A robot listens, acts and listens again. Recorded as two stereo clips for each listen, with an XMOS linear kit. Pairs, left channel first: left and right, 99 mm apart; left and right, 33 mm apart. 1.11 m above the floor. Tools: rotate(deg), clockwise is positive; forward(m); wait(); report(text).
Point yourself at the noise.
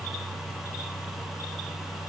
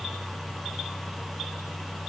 wait()
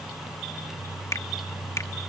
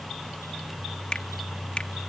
rotate(-30)
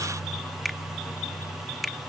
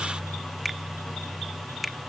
report("Found it: a finger snap, straight ahead.")